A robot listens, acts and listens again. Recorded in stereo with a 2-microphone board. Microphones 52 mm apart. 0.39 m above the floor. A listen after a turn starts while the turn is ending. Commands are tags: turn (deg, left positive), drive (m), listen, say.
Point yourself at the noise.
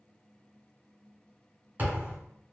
<turn deg="-35"/>
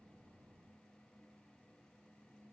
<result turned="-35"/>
<listen/>
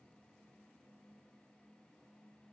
<say>I heard a thud, but can't make it out now. It was about straight ahead or 110° right.</say>